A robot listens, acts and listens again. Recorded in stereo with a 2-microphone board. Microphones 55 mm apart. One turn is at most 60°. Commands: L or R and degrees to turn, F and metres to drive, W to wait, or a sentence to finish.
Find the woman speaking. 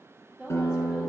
R30
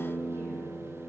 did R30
W
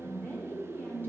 L35
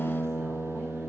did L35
W
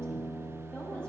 L20
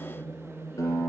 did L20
Facing the woman speaking.